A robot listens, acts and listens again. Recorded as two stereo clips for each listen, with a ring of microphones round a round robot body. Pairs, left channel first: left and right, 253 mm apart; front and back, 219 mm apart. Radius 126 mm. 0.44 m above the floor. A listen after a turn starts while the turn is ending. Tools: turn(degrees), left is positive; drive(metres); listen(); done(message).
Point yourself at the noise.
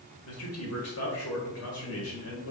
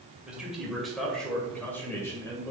turn(degrees=70)
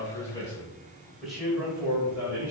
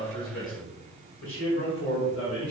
turn(degrees=-10)
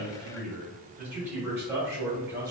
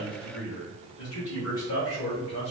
turn(degrees=-15)
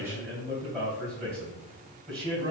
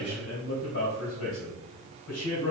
done("Facing the man speaking, 2 to 4 m away.")